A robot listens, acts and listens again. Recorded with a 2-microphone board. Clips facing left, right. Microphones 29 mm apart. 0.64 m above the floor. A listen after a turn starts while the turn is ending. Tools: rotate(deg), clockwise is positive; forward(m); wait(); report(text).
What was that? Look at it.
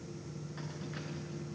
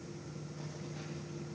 rotate(-55)
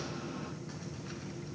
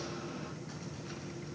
wait()
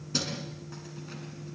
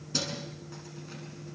rotate(-10)
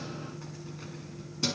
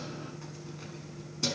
rotate(-10)
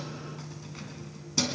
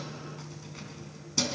rotate(-10)
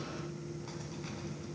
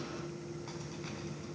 wait()
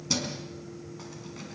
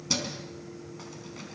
report("Facing the keys jangling, over 4 m away.")